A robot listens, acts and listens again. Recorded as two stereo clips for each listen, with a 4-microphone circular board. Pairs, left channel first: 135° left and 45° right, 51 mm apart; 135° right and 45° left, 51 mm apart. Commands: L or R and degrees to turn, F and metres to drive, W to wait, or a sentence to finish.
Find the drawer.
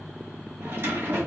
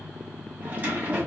R10
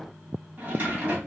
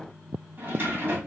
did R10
Facing the drawer, 1 to 2 m away.